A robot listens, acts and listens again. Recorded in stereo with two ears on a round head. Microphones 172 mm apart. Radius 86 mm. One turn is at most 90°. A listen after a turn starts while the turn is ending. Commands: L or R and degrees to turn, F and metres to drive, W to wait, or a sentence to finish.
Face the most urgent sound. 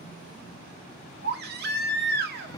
R55
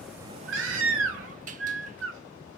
R70
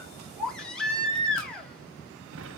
Facing the baby crying, 1 to 2 m away.